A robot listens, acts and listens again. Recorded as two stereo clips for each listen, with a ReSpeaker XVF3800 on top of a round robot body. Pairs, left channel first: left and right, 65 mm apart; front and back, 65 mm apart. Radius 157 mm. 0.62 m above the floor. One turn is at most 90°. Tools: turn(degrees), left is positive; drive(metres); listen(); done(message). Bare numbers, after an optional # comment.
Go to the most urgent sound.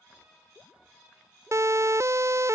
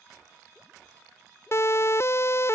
# The siren: 50° right.
turn(-50)
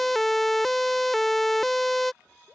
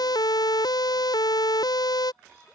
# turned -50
drive(1.0)
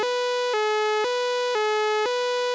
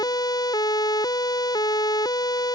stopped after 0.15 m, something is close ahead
done("Blocked. The siren is further on, straight ahead.")